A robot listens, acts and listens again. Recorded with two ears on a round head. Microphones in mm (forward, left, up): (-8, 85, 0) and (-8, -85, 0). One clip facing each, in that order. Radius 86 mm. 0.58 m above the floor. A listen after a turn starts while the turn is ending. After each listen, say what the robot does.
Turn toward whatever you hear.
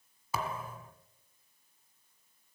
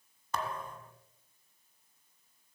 Turn 30° left.
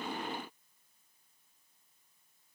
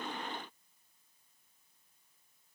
Keep listening.
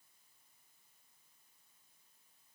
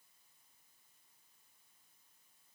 I heard a thud, but can't make it out now. It was about 25° right or 145° left.